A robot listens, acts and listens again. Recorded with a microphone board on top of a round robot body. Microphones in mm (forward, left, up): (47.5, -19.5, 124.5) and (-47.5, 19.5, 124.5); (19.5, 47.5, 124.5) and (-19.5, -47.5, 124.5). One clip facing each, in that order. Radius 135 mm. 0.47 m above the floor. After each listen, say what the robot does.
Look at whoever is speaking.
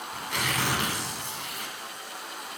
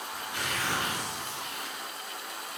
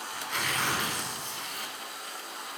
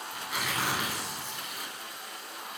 Keep listening.
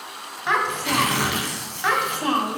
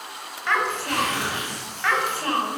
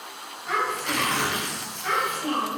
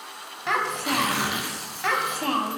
Turn 95° right.
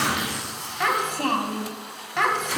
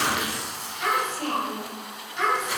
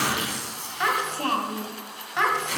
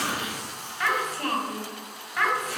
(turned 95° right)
Facing the child speaking.